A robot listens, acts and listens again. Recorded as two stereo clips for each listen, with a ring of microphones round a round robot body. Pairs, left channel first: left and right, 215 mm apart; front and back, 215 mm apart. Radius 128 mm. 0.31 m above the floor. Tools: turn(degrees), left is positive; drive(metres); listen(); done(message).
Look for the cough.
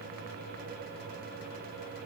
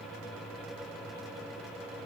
listen()
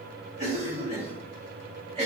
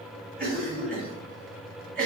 turn(degrees=-140)
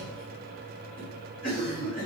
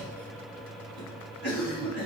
turn(degrees=25)
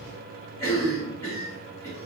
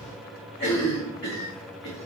turn(degrees=15)
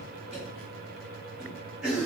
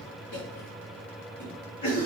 done("Found it: a cough, straight ahead, 2 to 4 m away.")